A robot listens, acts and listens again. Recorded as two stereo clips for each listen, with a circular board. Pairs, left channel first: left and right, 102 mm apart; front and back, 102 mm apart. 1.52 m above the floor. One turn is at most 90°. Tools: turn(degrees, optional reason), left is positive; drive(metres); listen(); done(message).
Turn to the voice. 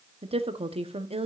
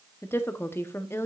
turn(degrees=-65, reason="The woman speaking: 65° right.")
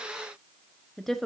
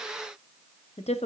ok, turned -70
done("Found it: a woman speaking, straight ahead.")